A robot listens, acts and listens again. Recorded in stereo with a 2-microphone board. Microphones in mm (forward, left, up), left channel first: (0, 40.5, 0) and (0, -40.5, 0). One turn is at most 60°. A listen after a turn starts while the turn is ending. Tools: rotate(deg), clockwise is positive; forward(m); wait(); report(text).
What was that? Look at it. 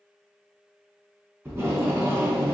rotate(30)
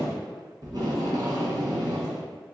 rotate(60)
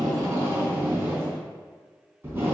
rotate(30)
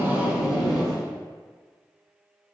report("Facing the tape being pulled, 1 to 2 m away.")